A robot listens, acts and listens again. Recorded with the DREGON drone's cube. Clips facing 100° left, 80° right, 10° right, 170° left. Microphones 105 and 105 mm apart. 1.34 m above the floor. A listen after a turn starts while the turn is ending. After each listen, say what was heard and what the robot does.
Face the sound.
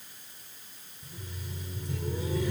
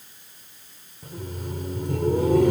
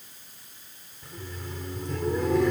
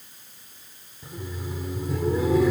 The laughter: 105° right. Turn 105° right.
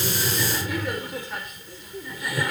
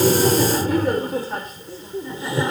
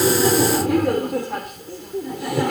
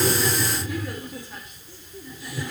The laughter is now 20° right. Turn 20° right.
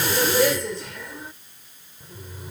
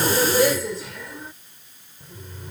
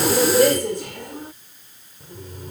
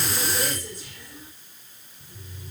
The laughter is now 15° left. Turn 15° left.
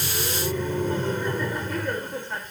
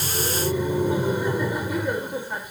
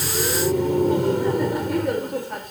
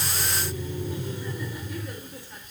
Found it: laughter, straight ahead.